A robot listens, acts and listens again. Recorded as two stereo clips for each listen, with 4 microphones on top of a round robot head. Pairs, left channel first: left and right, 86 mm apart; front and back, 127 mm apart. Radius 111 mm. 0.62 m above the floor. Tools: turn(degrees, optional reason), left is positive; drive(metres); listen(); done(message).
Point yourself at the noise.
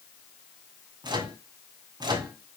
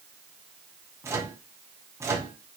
turn(degrees=-115, reason="The microwave: 115° right.")
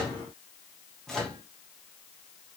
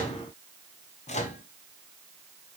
done("Facing the microwave, 1 to 2 m away.")